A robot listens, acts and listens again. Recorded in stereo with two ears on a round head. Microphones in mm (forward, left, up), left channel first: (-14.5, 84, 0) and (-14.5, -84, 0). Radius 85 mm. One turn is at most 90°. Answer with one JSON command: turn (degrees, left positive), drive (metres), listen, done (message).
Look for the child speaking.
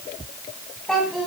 {"turn": 30}
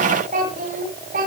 {"turn": -45}
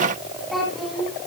{"done": "Facing the child speaking, 2 to 4 m away."}